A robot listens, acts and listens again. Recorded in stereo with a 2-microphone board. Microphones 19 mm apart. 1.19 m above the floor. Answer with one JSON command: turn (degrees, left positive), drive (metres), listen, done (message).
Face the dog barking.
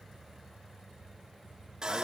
{"listen": true}
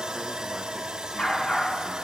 {"turn": 65}
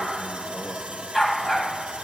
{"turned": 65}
{"done": "Facing the dog barking."}